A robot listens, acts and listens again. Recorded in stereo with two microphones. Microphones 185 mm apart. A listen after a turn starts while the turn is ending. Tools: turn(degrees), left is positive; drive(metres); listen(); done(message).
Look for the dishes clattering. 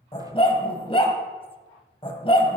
listen()
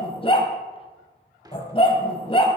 turn(degrees=-20)
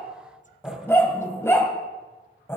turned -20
listen()
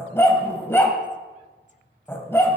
listen()
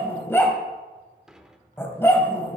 done("Found it: dishes clattering, straight ahead, 1 to 2 m away.")